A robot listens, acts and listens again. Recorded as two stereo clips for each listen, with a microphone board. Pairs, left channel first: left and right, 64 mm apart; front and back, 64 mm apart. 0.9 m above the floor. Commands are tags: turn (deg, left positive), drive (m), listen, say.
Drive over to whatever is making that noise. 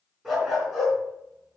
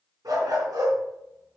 <turn deg="180"/>
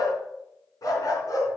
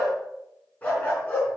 <turn deg="65"/>
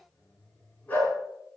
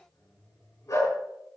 <turn deg="25"/>
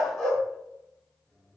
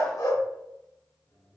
<drive m="1.0"/>
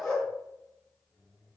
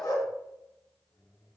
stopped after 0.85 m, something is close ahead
<turn deg="10"/>
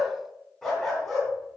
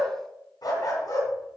<say>Blocked. The dog barking is further on, straight ahead.</say>